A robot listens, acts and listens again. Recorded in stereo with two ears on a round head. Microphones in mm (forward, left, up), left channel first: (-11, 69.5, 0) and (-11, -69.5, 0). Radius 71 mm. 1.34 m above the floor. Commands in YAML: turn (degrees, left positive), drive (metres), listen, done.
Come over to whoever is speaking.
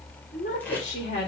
turn: 45
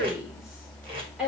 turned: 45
drive: 1.0
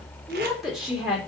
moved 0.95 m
drive: 1.0
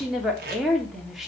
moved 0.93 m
drive: 1.0
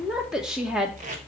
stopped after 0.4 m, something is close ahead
done: "I am next to the woman speaking."